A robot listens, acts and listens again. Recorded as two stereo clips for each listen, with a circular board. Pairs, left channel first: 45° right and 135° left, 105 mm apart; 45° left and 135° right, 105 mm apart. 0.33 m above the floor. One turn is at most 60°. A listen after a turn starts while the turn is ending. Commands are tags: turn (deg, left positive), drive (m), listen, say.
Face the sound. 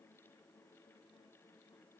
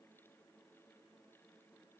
<listen/>
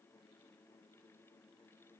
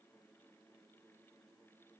<listen/>
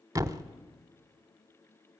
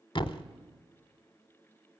<turn deg="60"/>
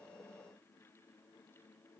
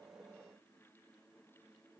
<turn deg="25"/>
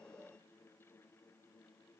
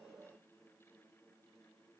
<say>I heard a thud from this way, but can't make it out now.</say>